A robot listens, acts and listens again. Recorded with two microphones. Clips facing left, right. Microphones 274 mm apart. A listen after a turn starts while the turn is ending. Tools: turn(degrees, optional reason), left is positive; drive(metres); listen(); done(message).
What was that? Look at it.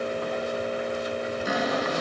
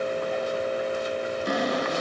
turn(degrees=30)
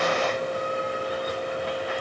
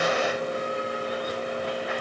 listen()
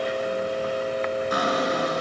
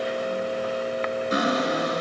turn(degrees=-25, reason="So it is at 25° right.")
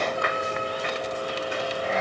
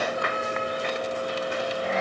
listen()
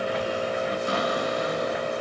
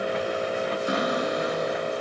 turn(degrees=-20, reason="The cupboard door is now 20° right.")
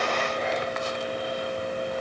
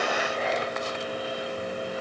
listen()
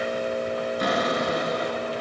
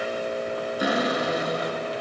done("Found it: a cupboard door, straight ahead, over 4 m away.")